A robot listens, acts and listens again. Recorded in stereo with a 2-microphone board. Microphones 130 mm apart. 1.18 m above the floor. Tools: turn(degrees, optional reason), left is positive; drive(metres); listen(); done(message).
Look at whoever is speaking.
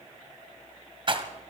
listen()
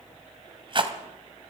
listen()
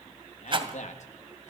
turn(degrees=65, reason="The man speaking: about 65° left or 115° left.")
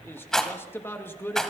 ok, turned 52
turn(degrees=20, reason="So it is at 20° left.")
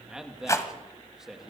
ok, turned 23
done("Facing the man speaking.")